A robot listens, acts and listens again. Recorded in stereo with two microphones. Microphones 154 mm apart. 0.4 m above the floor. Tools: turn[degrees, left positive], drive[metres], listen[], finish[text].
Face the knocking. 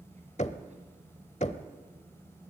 Thought: The knocking: about 50° left or 130° left.
Action: turn[50]
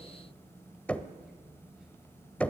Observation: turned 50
Thought: So it is at 10° left.
Action: turn[10]
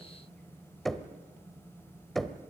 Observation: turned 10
Action: finish[Found it: knocking, straight ahead, 1 to 2 m away.]